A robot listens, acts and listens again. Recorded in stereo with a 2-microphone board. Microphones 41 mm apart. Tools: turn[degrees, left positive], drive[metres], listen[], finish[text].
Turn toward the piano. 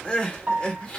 Thought: The piano: about 30° right or 150° right.
Action: turn[-30]
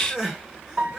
Thought: So it is at 115° right.
Action: turn[-115]
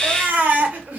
Action: listen[]
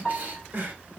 Thought: The piano is now 15° left.
Action: turn[15]
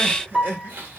Action: finish[Found it: a piano, straight ahead.]